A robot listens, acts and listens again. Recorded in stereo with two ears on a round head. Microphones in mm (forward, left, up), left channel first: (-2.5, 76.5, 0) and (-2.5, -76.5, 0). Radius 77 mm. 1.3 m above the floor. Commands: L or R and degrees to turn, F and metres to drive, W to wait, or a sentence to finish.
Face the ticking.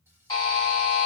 W
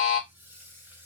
W
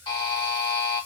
I can't make out ticking to turn to.